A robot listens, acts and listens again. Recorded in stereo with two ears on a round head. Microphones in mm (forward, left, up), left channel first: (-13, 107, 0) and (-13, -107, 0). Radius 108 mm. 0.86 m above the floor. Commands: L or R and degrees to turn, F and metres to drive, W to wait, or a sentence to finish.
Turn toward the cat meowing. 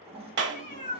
L35
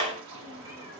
R20
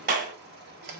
W
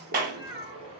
R25
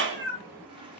R10
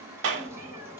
R10
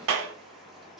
W
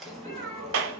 Facing the cat meowing.